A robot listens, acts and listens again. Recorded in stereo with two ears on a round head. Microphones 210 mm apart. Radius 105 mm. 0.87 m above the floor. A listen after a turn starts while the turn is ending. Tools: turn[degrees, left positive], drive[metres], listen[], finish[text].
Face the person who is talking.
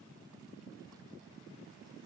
Action: listen[]
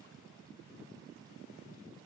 Action: listen[]
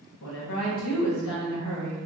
Thought: The woman speaking: about 65° left or 115° left.
Action: turn[65]
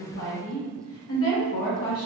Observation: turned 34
Thought: So it is at 70° left.
Action: turn[70]
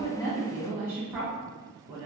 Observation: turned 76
Thought: The woman speaking is now 10° right.
Action: turn[-10]
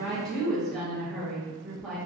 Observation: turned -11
Action: finish[Found it: a woman speaking, straight ahead, under 1 m away.]